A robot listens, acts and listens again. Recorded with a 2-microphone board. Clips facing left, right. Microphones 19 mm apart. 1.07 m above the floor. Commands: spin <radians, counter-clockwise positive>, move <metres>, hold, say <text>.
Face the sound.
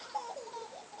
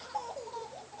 hold
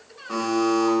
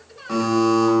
spin -0.87
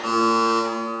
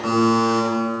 spin -0.17
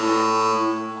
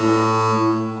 say Found it: a buzzer, straight ahead.